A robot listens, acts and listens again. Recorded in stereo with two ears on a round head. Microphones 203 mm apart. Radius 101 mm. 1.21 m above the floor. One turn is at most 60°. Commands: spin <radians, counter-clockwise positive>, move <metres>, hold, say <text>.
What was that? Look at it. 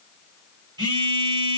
spin -0.35
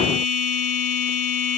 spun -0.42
say Found it: a phone buzzing, straight ahead.